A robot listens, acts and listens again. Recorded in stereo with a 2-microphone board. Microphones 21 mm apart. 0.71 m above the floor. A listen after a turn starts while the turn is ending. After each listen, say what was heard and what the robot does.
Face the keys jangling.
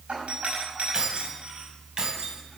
The keys jangling: about 30° right or 150° right. Turn 30° right.
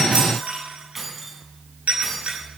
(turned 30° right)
Facing the keys jangling.